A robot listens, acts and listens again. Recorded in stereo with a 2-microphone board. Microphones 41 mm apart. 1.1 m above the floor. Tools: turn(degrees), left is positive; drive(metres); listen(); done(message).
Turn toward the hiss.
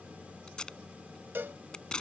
listen()
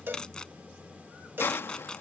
turn(degrees=65)
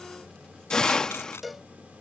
turn(degrees=15)
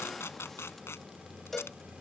listen()
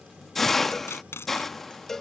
done("Found it: a hiss, straight ahead.")